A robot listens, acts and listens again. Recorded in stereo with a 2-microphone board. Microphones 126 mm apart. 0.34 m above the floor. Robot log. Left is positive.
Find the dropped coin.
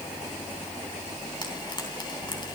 cmd idle
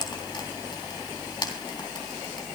cmd idle
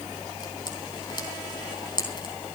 end: I can't make out a dropped coin, only frying.